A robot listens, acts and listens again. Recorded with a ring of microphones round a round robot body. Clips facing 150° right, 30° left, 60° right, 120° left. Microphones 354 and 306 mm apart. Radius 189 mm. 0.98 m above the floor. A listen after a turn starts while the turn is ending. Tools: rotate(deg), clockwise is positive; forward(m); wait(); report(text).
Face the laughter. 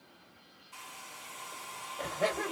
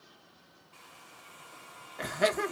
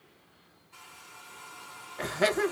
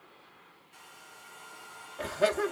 rotate(15)
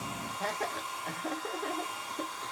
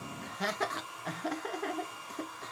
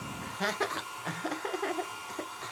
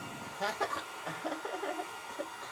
rotate(40)
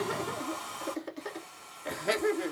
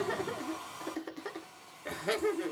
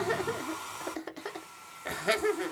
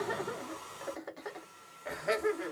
rotate(75)
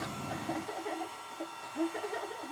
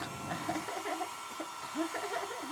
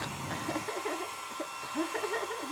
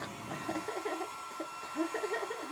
rotate(-10)
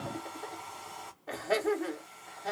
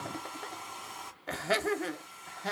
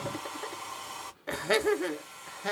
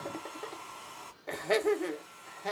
report("Facing the laughter, 1 to 2 m away.")